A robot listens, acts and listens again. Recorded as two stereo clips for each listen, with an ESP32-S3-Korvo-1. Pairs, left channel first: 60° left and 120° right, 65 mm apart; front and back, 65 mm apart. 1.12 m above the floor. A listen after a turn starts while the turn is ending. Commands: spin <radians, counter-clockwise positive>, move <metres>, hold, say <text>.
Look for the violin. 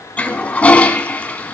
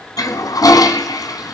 hold
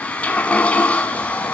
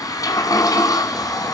hold
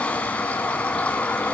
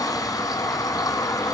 say I can't make out a violin, only a toilet flushing.